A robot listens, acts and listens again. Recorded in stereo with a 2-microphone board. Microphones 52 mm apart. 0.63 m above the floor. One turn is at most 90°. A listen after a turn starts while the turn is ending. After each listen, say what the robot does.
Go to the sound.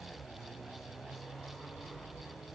Keep listening.
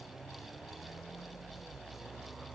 Keep listening.
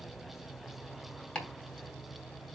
Turn 20° left.
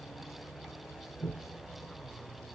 Drive 1.0 m forward.
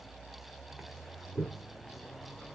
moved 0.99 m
Drive 1.0 m forward.
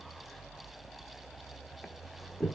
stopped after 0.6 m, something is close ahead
I am next to the chopping.